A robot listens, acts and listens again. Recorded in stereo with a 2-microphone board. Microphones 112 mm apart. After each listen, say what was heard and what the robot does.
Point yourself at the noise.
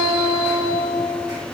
Keep listening.
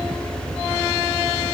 Keep listening.
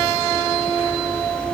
I can't make out anything to turn to.